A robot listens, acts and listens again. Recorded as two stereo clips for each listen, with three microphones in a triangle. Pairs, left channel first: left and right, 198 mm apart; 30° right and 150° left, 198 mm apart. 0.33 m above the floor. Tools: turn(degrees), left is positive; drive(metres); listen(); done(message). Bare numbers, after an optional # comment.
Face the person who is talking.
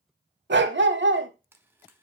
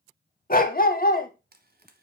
listen()
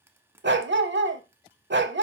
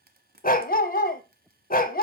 listen()
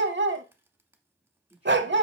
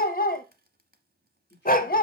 # The man speaking: 10° right.
turn(-10)
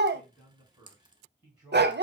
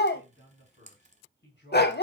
# The man speaking is now 10° right.
turn(-10)
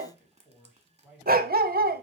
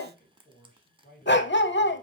done("Facing the man speaking, 2 to 4 m away.")